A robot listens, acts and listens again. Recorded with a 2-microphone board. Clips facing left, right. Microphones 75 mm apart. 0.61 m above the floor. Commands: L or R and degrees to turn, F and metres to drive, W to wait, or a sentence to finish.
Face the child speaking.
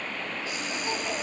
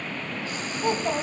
R55
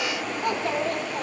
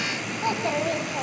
Facing the child speaking, 2 to 4 m away.